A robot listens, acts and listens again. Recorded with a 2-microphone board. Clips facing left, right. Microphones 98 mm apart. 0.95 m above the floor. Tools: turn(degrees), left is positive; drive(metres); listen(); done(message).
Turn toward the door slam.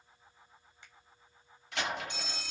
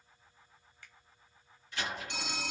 turn(degrees=70)
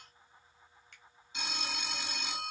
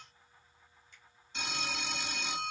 listen()
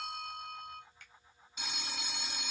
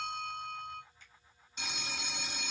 done("I heard a door slam, but can't make it out now. It was about straight ahead or 40° left.")